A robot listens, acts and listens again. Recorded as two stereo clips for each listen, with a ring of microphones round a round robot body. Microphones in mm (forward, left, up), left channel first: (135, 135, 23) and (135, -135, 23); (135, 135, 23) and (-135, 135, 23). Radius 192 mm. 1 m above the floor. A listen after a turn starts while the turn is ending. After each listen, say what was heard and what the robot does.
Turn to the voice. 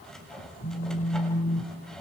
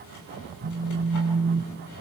Keep listening.
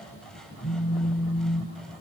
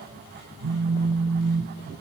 Keep listening.
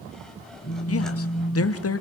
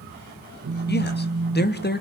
The man speaking: 55° left. Turn 55° left.
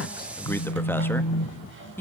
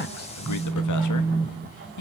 Facing the man speaking.